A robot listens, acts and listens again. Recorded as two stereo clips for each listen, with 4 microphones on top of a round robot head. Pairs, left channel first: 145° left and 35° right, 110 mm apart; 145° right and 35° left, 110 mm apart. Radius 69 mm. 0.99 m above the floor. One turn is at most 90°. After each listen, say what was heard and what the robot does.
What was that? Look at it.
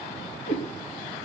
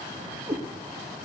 The cat meowing: 105° left. Turn 90° left.
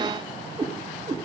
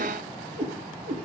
The cat meowing is now 20° left. Turn 20° left.
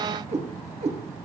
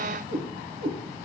Facing the cat meowing.